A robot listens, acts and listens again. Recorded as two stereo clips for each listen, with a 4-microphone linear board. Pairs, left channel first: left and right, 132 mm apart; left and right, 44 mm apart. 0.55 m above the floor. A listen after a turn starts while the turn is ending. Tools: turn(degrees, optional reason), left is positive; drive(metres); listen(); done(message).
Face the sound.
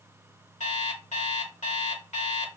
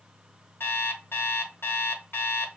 turn(degrees=65, reason="The alarm clock: about 65° left or 115° left.")
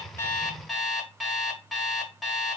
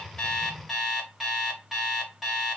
done("Found it: an alarm clock, straight ahead, under 1 m away.")